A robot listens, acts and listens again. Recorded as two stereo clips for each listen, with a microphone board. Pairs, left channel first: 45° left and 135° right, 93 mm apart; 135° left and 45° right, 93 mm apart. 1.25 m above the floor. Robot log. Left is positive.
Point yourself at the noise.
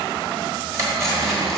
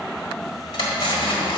note: The cutlery clinking: 165° left.
cmd yaw +165
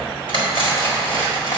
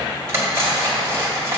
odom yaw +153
note: The cutlery clinking is now 15° left.
cmd yaw +15
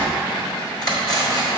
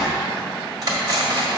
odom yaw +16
end: Facing the cutlery clinking.